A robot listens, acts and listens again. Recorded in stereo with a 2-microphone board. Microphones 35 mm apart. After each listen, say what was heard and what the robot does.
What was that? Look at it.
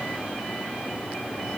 Keep listening.
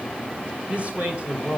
The man speaking: about 45° right or 135° right. Turn 45° right.
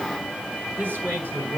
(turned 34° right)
So it is at 100° right. Turn 100° right.
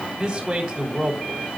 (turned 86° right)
The man speaking is now 15° right. Turn 15° right.
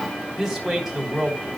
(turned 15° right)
Facing the man speaking, over 4 m away.